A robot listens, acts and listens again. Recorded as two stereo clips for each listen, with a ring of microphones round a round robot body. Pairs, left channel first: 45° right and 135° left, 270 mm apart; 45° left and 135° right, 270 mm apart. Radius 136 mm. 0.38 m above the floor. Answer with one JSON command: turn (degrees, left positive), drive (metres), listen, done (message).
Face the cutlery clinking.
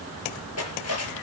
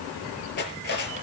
{"turn": -10}
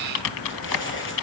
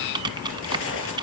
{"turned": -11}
{"listen": true}
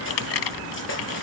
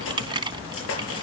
{"done": "Facing the cutlery clinking."}